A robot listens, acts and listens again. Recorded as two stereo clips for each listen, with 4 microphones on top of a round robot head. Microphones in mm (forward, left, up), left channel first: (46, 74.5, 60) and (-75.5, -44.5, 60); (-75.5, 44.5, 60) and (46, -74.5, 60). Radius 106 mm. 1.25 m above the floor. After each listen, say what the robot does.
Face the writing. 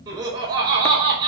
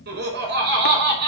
Keep listening.
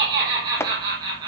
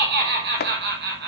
Keep listening.
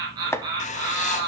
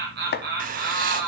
Facing the writing.